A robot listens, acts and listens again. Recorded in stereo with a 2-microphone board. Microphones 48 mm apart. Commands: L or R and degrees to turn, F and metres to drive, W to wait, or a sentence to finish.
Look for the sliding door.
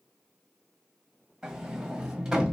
R30
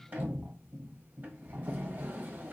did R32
R140
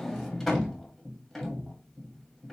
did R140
Found it: a sliding door, straight ahead, 1 to 2 m away.